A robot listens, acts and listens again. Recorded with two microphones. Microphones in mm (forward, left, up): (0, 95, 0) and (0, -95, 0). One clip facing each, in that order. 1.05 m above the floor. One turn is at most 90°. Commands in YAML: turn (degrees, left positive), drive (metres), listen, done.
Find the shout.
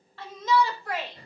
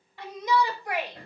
turn: -30
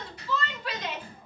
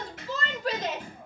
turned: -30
turn: -90
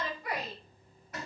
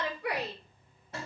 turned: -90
turn: -65
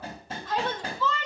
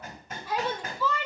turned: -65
turn: -10
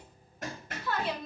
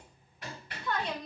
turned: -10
done: "Facing the shout, over 4 m away."